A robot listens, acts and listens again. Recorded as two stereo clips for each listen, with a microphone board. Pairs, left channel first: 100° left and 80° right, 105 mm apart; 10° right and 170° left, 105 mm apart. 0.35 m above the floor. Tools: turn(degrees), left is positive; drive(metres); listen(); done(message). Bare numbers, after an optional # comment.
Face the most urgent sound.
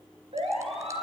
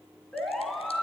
# The siren: 95° right.
turn(-95)
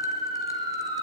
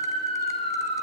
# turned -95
# The siren is now 30° right.
turn(-30)
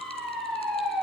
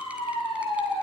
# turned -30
# The siren is now 15° left.
turn(15)
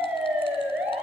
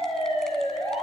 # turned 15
done("Facing the siren.")